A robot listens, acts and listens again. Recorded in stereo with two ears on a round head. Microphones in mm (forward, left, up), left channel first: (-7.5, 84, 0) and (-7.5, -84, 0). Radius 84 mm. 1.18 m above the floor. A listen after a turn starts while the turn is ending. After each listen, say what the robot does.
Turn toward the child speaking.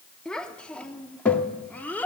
Turn 30° left.
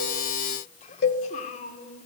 Turn 135° left.
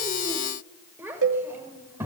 Turn 15° right.
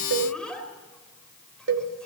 Facing the child speaking.